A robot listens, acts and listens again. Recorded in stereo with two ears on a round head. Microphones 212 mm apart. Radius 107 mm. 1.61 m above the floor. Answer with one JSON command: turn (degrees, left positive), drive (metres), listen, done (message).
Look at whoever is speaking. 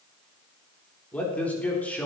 {"turn": 30}
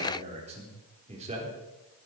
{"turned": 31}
{"turn": -25}
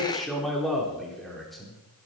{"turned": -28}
{"done": "Found it: a man speaking, straight ahead, over 4 m away."}